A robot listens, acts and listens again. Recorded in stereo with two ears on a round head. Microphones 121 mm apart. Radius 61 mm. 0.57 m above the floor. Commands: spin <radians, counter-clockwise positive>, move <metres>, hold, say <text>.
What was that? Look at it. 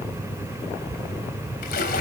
spin 1.57
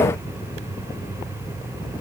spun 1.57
say I heard a splash from this way, but can't make it out now.